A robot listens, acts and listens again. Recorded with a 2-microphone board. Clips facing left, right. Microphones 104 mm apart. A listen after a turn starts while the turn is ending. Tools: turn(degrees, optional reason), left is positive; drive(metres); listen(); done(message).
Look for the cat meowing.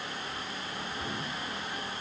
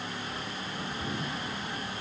listen()
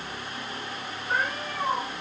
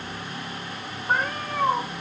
turn(degrees=-45, reason="The cat meowing: about 45° right or 135° right.")
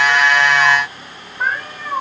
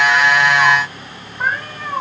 done("Found it: a cat meowing, straight ahead.")